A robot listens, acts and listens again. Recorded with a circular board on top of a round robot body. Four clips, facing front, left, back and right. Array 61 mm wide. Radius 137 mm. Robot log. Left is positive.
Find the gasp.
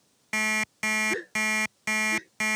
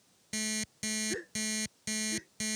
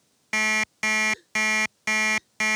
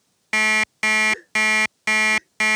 end: Found it: a gasp, straight ahead.